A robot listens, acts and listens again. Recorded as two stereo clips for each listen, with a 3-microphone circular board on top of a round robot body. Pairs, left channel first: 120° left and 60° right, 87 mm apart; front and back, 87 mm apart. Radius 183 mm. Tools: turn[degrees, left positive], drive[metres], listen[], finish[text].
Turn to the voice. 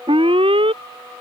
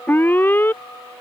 Action: listen[]
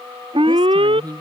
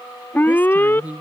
Thought: The woman speaking: 105° right.
Action: turn[-105]
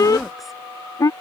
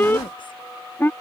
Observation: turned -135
Thought: Nothing new. It was at 30° left.
Action: turn[30]
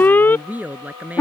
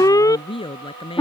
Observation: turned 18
Thought: The woman speaking is now 10° left.
Action: turn[10]
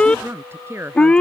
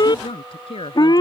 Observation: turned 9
Action: finish[Facing the woman speaking.]